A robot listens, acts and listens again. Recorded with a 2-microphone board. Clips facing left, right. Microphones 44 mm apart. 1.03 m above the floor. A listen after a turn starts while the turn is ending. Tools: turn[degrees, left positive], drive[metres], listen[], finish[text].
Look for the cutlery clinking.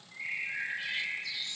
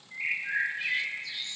Action: listen[]
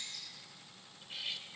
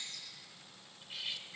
Action: turn[30]
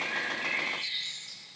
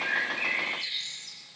Action: listen[]
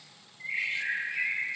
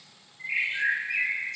Action: listen[]
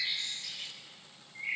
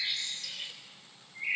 Thought: So it is at 30° right.
Action: turn[-30]
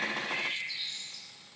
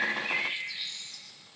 Action: listen[]
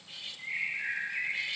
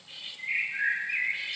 Thought: The cutlery clinking is now 15° right.
Action: turn[-15]
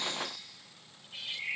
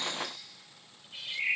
Action: finish[Found it: cutlery clinking, straight ahead.]